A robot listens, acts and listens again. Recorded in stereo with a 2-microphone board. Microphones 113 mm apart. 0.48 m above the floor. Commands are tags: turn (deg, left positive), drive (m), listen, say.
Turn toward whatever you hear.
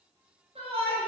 <turn deg="-60"/>
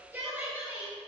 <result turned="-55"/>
<turn deg="-20"/>
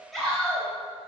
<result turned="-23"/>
<say>Facing the shout.</say>